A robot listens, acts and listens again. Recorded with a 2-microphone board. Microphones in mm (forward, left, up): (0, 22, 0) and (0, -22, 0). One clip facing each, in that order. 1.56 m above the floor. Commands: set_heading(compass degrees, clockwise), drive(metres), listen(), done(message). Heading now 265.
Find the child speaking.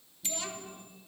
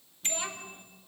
set_heading(285)
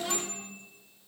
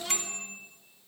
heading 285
done("Found it: a child speaking, straight ahead.")